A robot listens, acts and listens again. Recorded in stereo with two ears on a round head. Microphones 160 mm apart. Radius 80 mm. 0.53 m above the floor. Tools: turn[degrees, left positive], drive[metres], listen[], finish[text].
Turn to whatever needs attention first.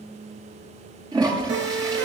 Thought: The siren: about 70° right or 110° right.
Action: turn[-70]
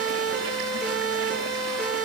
Action: finish[Facing the siren.]